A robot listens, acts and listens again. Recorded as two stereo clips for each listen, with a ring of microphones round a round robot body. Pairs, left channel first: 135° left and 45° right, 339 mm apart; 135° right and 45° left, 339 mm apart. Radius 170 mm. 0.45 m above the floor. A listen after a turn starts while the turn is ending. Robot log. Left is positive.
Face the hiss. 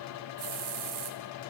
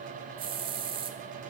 note: The hiss: 30° right.
cmd yaw -30
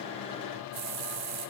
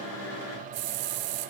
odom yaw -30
end: Found it: a hiss, straight ahead.